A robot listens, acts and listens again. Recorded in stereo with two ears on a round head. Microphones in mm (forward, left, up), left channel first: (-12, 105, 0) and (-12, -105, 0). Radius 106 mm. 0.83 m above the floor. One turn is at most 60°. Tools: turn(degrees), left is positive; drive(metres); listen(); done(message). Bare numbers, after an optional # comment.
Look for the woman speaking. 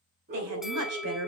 turn(-60)
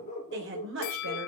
# So it is at 55° right.
turn(-55)
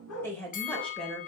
done("Found it: a woman speaking, straight ahead.")